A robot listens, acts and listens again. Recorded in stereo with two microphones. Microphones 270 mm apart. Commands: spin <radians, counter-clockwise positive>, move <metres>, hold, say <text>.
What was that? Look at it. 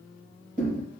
spin -0.52
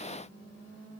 hold
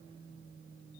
say I heard a thud, but can't make it out now. It was about straight ahead or 120° right.